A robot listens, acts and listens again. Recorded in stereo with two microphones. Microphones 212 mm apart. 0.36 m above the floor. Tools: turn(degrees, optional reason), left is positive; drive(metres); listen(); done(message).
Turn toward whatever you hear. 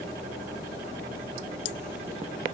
listen()
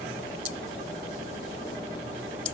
listen()
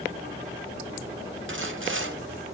turn(degrees=-65, reason="The sawing: about 65° right or 115° right.")
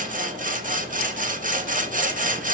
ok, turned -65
turn(degrees=-40, reason="So it is at 40° right.")
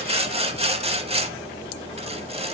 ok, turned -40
turn(degrees=-30, reason="The sawing is now 30° right.")
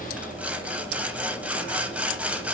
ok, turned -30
done("Found it: sawing, straight ahead.")